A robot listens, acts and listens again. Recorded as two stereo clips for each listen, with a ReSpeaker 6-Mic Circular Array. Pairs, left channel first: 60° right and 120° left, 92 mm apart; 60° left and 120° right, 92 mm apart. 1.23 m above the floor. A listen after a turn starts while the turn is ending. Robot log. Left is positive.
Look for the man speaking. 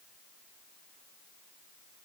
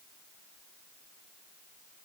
cmd idle
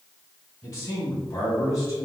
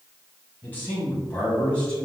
note: The man speaking: 15° right.
cmd yaw -15
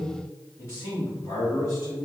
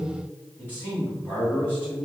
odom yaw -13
note: The man speaking is now 15° right.
cmd yaw -15
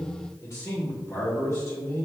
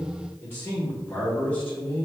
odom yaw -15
end: Facing the man speaking.